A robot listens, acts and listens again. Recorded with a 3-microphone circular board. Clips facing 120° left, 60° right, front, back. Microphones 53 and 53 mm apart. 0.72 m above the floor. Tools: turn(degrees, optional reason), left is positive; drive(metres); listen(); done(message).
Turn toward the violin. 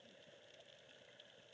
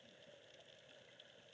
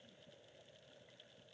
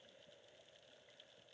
listen()
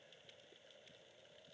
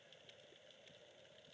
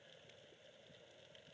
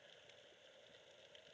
listen()
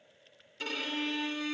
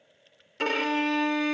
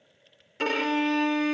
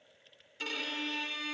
turn(degrees=-35, reason="The violin: 35° right.")
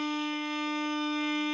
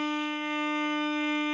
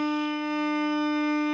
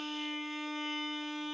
done("Facing the violin.")